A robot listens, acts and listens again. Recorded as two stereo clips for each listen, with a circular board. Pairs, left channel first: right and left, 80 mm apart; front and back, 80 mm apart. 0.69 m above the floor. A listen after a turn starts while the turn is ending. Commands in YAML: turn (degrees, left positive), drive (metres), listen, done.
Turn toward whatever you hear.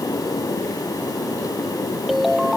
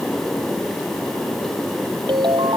turn: 180
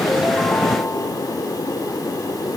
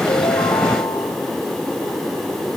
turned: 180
listen: true
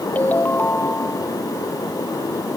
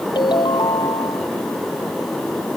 turn: -20
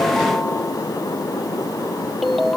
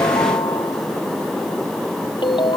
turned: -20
done: "Facing the ringtone."